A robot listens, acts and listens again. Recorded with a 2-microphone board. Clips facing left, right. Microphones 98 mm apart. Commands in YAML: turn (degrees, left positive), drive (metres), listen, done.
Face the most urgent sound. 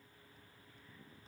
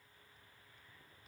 listen: true
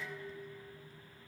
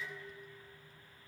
listen: true
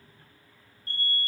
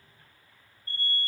turn: 90
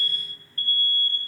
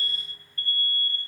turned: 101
turn: -20
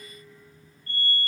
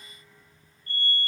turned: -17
done: "Found it: an alarm, straight ahead."